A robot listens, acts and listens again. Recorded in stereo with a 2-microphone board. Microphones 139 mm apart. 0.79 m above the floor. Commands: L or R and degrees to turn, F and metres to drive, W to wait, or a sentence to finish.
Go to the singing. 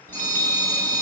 W
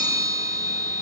W
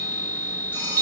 I can't make out singing to turn to.